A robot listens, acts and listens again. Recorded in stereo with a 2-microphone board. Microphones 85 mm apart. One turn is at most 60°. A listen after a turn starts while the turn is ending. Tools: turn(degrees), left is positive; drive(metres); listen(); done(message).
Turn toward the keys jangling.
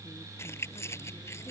turn(degrees=35)
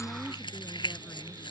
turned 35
turn(degrees=60)
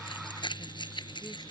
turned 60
turn(degrees=60)
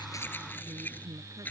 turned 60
turn(degrees=20)
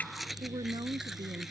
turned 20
done("Facing the keys jangling.")